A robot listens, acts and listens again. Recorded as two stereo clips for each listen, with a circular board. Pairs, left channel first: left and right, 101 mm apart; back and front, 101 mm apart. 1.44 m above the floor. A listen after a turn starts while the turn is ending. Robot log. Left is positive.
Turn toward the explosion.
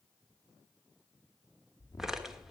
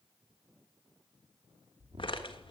note: The explosion: 30° left.
cmd yaw +30
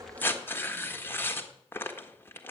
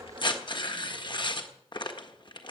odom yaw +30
end: I heard an explosion from this way, but can't make it out now.